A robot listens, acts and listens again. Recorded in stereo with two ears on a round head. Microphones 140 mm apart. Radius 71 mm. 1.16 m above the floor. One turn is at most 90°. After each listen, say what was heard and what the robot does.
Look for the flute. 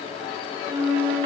The flute: about 50° right or 130° right. Turn 50° right.
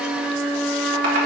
Facing the flute.